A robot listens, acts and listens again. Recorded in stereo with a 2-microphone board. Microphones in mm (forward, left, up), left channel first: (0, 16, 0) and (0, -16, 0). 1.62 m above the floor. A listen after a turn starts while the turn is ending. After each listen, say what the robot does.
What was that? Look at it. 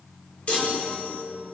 Turn 45° left.
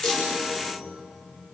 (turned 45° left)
Keep listening.
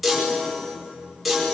Facing the chime.